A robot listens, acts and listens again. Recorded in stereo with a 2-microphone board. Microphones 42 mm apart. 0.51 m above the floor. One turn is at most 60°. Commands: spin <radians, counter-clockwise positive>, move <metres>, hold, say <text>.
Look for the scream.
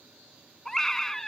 spin 0.52
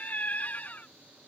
spin 1.05
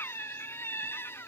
spin 1.05
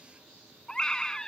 spin 0.26
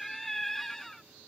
say Facing the scream.